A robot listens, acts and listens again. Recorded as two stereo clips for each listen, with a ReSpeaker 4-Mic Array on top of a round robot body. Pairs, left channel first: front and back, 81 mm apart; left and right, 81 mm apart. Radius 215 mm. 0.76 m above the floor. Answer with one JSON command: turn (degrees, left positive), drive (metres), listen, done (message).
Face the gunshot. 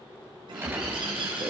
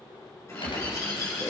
{"turn": 115}
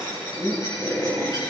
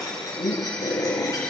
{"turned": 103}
{"turn": 10}
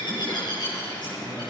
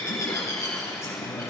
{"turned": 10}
{"done": "I heard a gunshot from this way, but can't make it out now."}